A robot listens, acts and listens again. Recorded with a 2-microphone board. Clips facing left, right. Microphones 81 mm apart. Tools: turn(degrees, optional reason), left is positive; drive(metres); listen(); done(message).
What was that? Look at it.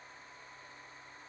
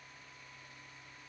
listen()
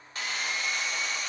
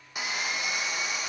turn(degrees=-30)
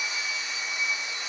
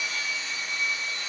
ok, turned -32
turn(degrees=20, reason="So it is at 20° left.")
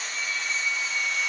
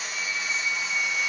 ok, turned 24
done("Found it: sawing, straight ahead.")